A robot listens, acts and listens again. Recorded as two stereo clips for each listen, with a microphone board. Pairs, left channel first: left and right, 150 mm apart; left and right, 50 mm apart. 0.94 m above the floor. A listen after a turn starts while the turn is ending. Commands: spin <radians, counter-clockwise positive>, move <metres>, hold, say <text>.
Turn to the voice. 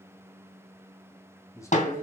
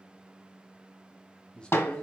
spin 0.35
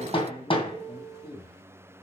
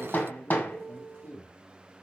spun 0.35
spin 2.44
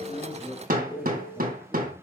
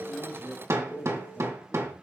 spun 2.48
say Found it: a man speaking, straight ahead, 2 to 4 m away.